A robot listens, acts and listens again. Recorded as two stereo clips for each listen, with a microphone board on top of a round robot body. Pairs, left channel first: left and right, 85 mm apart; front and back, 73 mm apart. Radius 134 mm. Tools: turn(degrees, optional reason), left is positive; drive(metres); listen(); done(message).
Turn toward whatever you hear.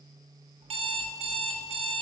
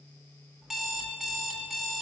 turn(degrees=-95, reason="The alarm clock: 95° right.")
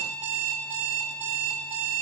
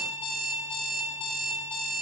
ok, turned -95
turn(degrees=-20, reason="The alarm clock is now 20° right.")
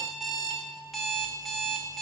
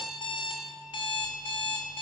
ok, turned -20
done("Found it: an alarm clock, straight ahead, 1 to 2 m away.")